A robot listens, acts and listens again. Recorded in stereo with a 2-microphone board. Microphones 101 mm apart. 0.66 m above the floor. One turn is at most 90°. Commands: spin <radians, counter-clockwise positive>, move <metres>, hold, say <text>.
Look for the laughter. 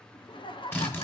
spin 1.05
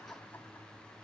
hold
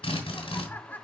spin 0.35
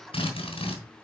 hold
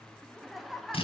say Facing the laughter.